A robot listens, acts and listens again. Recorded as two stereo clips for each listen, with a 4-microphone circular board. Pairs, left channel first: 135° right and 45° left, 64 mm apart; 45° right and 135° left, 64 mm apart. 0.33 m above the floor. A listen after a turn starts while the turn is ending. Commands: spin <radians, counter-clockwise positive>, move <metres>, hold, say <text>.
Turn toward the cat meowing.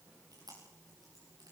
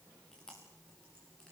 hold
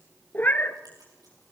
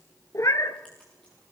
spin -1.31
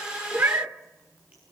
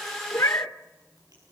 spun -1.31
say Found it: a cat meowing, straight ahead, 1 to 2 m away.